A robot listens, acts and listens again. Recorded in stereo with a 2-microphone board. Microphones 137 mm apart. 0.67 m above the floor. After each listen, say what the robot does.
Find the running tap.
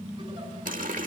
Turn 90° right.
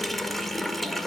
Facing the running tap.